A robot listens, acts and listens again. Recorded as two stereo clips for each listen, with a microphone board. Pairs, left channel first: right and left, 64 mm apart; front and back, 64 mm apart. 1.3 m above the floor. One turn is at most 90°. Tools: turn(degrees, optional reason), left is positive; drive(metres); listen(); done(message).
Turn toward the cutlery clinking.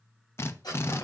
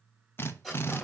turn(degrees=-90, reason="The cutlery clinking: 90° right.")
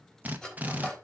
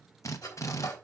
turn(degrees=-15, reason="The cutlery clinking is now 15° right.")
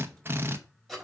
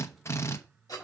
done("Found it: cutlery clinking, straight ahead.")